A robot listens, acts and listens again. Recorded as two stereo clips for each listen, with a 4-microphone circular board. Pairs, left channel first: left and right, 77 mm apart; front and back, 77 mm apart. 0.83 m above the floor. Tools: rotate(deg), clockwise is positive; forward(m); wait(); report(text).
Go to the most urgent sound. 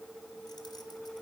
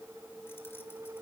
wait()
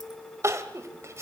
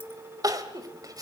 rotate(145)
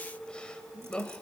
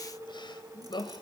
rotate(-10)
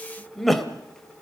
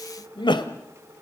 forward(1.0)
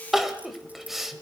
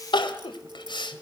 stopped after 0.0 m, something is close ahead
report("Something is in my way. I am facing the crying but have not reached it.")